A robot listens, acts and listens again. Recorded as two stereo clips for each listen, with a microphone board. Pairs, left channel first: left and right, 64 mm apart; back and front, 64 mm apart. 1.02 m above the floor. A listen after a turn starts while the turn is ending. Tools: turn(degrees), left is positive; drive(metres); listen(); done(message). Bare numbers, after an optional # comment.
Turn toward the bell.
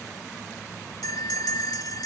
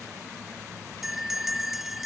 # The bell: 85° left.
turn(85)
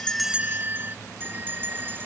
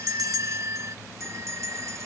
# The bell is now 35° right.
turn(-35)
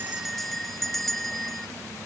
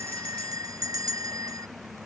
done("Found it: a bell, straight ahead.")